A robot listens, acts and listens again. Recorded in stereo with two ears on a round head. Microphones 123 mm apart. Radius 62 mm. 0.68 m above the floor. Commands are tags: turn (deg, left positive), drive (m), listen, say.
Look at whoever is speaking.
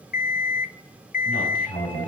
<turn deg="65"/>
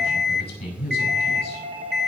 <turn deg="50"/>
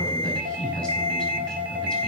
<turn deg="10"/>
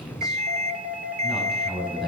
<say>Facing the man speaking.</say>